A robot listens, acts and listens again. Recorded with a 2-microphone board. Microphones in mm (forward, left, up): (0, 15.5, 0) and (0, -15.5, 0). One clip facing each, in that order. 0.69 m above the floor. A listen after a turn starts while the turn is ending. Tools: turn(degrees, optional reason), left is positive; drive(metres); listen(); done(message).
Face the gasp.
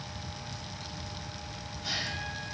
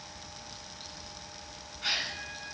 turn(degrees=-90)
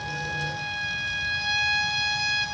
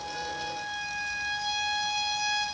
done("I heard a gasp from this way, but can't make it out now.")